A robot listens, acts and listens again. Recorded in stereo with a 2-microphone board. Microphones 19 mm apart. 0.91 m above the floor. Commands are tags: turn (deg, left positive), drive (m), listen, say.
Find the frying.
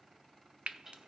<turn deg="-65"/>
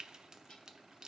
<turn deg="-35"/>
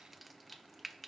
<say>Found it: frying, straight ahead, under 1 m away.</say>